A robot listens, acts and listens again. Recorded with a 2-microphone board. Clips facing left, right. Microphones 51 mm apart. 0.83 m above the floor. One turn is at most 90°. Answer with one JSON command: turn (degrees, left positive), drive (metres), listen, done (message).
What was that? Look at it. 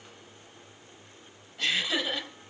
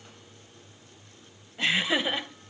{"turn": -25}
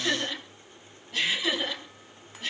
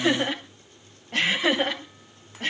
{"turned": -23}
{"turn": -90}
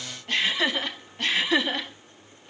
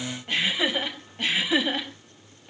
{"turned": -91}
{"turn": -10}
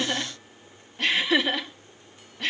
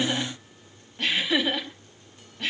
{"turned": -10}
{"done": "Found it: laughter, straight ahead, over 4 m away."}